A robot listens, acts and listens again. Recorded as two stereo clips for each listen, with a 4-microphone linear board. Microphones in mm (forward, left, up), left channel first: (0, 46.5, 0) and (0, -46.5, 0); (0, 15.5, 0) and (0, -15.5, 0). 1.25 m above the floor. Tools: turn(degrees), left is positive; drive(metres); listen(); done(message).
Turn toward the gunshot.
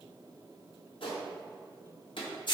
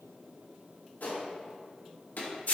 turn(degrees=70)
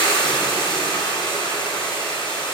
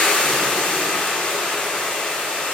listen()
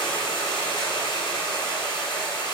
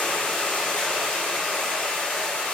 done("I heard a gunshot, but can't make it out now. It was about straight ahead or 40° left.")